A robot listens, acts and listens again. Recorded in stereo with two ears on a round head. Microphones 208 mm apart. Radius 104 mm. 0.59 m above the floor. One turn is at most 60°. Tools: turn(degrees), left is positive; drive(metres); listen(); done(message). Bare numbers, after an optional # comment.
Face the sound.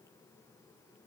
listen()
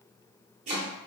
# The chopping: about 30° right or 150° right.
turn(-30)
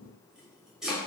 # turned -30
done("Facing the chopping.")